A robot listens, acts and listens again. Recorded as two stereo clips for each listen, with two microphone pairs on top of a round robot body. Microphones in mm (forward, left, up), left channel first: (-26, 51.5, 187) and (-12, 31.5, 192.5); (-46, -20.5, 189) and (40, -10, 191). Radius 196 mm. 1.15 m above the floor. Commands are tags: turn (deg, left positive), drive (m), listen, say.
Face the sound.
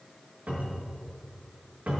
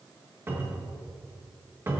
<turn deg="-55"/>
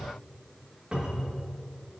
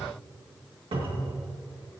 <turn deg="-10"/>
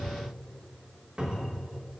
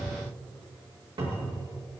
<say>Found it: a cupboard door, straight ahead, 2 to 4 m away.</say>